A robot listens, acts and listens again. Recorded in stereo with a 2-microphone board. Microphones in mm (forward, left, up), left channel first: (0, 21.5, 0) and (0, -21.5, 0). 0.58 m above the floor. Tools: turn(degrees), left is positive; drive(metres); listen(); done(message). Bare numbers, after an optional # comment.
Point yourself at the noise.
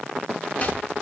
listen()
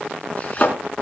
# The chopping: about 35° left or 145° left.
turn(35)
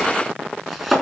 done("Found it: chopping, straight ahead, over 4 m away.")